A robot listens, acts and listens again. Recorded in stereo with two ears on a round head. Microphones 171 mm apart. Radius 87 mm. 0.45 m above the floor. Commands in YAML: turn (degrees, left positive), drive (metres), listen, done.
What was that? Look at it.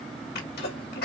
turn: 55
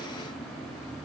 listen: true
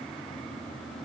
done: "I heard a sneeze, but can't make it out now. It was about straight ahead or 70° left."